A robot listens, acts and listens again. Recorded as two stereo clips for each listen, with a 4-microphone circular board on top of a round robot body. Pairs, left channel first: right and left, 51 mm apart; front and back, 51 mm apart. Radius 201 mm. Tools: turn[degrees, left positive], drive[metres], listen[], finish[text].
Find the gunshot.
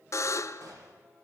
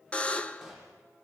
Thought: The gunshot: 100° left.
Action: turn[100]
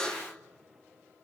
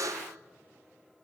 Action: finish[I heard a gunshot from this way, but can't make it out now.]